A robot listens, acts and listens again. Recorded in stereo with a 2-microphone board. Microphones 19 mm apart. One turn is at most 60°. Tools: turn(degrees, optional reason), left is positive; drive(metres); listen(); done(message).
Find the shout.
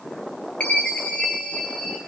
listen()
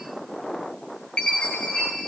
listen()
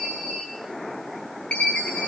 done("I can't make out a shout to turn to.")